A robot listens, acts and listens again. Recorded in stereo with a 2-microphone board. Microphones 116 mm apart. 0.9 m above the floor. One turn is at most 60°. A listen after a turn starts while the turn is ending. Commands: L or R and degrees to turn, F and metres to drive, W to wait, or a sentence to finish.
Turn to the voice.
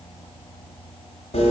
W
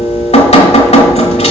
W
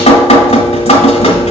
I can't make out anyone speaking to turn to.